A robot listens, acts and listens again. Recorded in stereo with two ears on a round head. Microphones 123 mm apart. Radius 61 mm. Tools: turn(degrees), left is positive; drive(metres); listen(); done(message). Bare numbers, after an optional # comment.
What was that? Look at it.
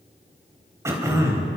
# The throat clearing: about 20° right or 160° right.
turn(-20)
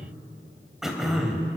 done("Facing the throat clearing.")